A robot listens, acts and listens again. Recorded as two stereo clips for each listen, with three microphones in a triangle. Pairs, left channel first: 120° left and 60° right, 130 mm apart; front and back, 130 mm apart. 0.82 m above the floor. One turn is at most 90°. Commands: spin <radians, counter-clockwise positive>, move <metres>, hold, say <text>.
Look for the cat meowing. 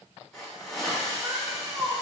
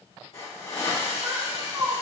spin -1.57
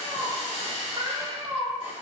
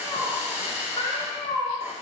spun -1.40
spin -0.44
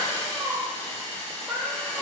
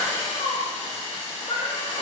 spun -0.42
spin 0.44
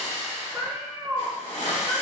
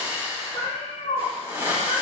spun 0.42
spin 0.26
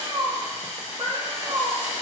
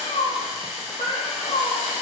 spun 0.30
say Facing the cat meowing.